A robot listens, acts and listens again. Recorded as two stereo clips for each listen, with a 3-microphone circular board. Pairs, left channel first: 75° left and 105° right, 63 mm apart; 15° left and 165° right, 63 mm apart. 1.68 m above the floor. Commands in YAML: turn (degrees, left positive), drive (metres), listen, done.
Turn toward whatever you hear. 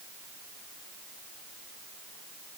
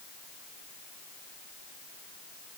listen: true
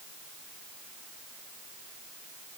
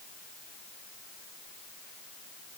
listen: true
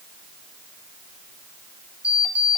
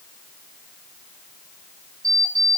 turn: -175
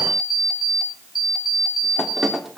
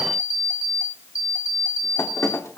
turn: -20
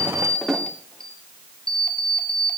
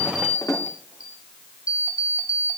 done: "Facing the alarm clock, 2 to 4 m away."